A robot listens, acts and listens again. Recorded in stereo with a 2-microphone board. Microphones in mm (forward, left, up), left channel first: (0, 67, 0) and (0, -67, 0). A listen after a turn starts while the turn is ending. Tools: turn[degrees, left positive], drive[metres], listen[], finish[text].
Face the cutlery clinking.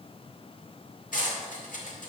Action: turn[90]
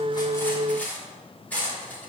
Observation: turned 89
Thought: So it is at 10° left.
Action: turn[10]
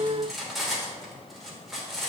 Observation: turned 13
Action: finish[Facing the cutlery clinking, 2 to 4 m away.]